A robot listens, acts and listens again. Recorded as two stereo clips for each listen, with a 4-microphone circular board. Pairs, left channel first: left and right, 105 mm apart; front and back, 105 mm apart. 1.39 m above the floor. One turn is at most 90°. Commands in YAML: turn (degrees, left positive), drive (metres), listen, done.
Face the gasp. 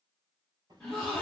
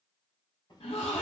turn: 10
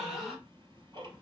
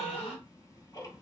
done: "Found it: a gasp, straight ahead, 1 to 2 m away."